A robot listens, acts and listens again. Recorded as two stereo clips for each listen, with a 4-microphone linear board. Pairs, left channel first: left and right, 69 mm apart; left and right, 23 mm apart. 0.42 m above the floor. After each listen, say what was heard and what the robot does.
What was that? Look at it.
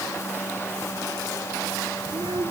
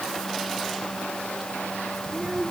Turn 90° right.
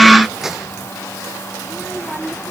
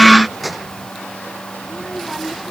So it is at 10° right. Turn 10° right.
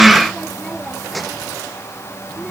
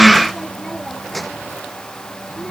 Found it: a child speaking, straight ahead.